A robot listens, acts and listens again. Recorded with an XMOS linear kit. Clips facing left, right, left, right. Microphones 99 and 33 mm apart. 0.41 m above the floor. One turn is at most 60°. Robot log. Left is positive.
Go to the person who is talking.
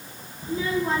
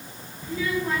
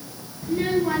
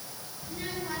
note: The child speaking: about 30° left or 150° left.
cmd yaw +30
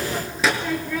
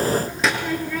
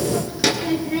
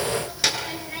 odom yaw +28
cmd fwd 1.0
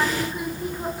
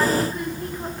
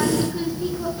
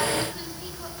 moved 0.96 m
cmd fwd 1.0
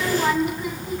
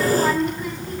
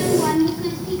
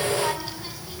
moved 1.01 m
cmd fwd 1.0
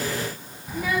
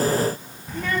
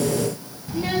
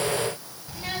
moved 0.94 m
note: The child speaking is now 10° left.
cmd yaw +10
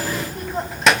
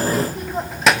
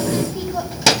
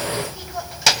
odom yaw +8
cmd fwd 1.0
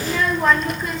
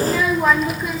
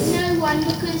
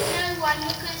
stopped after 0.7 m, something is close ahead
end: Arrived at the child speaking, straight ahead.